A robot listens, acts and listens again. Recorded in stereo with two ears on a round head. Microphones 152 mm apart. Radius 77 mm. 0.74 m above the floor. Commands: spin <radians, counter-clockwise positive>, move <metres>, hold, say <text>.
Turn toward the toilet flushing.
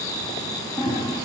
spin 0.61
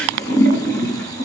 spin 1.83
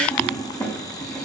say Facing the toilet flushing.